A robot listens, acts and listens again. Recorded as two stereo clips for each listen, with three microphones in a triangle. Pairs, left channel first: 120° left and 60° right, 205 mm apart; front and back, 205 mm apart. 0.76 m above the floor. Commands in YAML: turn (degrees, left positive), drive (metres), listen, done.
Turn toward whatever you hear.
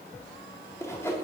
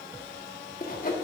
turn: 45
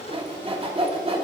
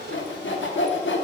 done: "Facing the sawing, under 1 m away."